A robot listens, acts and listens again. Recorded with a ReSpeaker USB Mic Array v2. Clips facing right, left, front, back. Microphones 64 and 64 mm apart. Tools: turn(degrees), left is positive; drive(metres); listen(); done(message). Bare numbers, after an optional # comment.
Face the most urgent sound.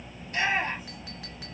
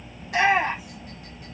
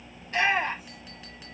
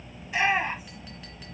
# The shout: 100° left.
turn(100)
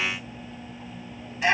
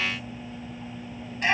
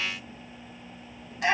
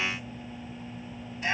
done("Found it: a shout, straight ahead, over 4 m away.")